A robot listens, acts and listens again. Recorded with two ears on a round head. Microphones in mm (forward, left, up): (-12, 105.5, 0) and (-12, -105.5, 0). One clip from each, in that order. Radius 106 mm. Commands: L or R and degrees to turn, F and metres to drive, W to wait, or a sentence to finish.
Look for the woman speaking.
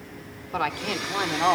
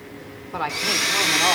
L20
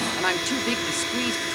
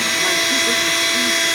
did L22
W
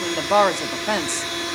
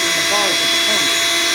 L115
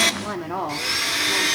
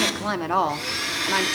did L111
R40
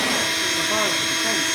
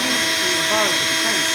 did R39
W
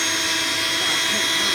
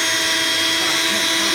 W
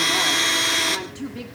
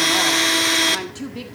R15
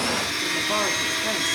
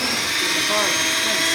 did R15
W
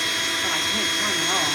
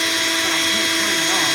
W
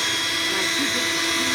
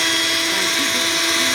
Facing where the woman speaking came from. I can't hear it now.